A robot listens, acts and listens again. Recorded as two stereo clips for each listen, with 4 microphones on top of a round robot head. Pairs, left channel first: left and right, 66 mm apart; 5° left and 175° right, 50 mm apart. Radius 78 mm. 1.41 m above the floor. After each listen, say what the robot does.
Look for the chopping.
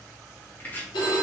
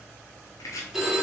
Turn 25° left.
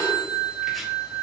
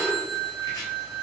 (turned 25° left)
Keep listening.
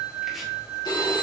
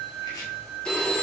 Keep listening.
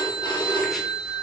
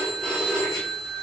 Facing where the chopping came from. I can't hear it now.